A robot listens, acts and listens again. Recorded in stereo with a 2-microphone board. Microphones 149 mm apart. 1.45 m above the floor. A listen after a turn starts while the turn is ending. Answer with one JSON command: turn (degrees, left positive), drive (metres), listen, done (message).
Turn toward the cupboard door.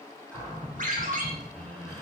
{"turn": 30}
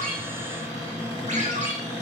{"turn": 140}
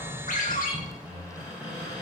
{"turn": -15}
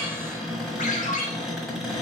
{"done": "Found it: a cupboard door, straight ahead, 1 to 2 m away."}